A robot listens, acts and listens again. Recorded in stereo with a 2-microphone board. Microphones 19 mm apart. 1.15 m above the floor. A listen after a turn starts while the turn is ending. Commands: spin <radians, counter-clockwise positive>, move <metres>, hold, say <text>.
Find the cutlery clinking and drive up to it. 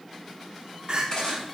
spin 0.70
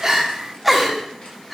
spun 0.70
hold
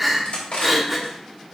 spin 1.66
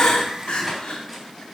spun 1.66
hold
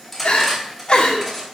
move 1.0
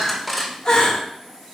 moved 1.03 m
move 1.0
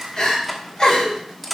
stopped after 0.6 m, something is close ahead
spin 0.17
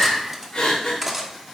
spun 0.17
say Arrived at the cutlery clinking, straight ahead.